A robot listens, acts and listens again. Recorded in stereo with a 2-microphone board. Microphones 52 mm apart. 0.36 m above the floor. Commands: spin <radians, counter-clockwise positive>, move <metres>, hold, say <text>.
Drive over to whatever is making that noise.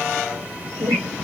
spin -1.57
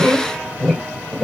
move 1.0
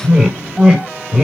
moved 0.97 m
spin -0.17
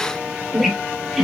move 1.0
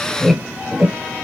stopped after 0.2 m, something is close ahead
spin -0.17
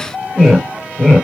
say I am next to the squeak.